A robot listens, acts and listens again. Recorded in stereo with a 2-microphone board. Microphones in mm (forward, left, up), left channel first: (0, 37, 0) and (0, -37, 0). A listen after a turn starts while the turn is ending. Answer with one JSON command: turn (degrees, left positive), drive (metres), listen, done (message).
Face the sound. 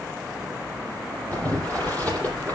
{"turn": 20}
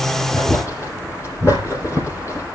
{"turn": 140}
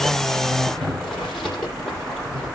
{"turn": 10}
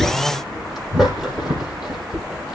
{"done": "Facing the boiling."}